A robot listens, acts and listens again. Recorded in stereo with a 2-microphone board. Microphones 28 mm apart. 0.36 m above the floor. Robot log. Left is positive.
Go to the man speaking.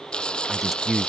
cmd yaw -30
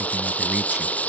cmd idle
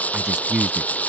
note: So it is at 140° right.
cmd yaw -140
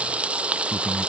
note: The man speaking is now 25° left.
cmd yaw +25
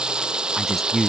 note: The man speaking is now 10° left.
cmd yaw +10
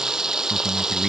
cmd fwd 1.0
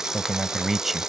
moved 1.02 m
cmd fwd 1.0
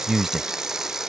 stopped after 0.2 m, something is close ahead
end: Arrived at the man speaking, straight ahead.